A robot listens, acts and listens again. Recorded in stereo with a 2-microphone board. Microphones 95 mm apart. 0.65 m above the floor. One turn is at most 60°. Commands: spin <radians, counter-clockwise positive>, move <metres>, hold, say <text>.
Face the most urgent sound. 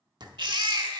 spin -0.87
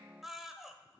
say Found it: a baby crying, straight ahead.